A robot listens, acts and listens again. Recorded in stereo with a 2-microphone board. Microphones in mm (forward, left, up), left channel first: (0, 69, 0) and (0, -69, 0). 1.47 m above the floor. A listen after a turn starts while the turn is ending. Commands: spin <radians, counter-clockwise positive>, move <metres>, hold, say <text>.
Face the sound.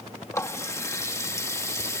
spin 0.35
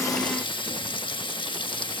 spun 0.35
spin 2.36
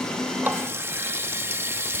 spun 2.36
spin -0.35
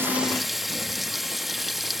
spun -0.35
say Found it: a running tap, straight ahead.